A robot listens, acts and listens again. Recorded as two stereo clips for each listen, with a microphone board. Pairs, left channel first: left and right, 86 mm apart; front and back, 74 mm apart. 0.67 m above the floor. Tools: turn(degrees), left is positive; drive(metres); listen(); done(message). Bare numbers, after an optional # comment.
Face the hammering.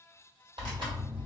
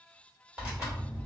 listen()
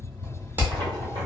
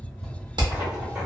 # The hammering: 160° right.
turn(-160)
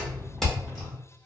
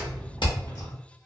done("Facing the hammering.")